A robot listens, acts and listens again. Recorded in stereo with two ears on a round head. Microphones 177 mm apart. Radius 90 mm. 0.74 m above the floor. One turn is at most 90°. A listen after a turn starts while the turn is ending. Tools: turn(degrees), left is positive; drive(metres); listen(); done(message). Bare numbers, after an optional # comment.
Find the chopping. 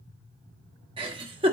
listen()
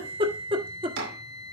# The chopping: about 75° right or 105° right.
turn(-75)
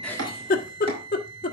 listen()
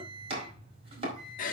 # So it is at 30° right.
turn(-30)
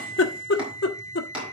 done("Facing the chopping, over 4 m away.")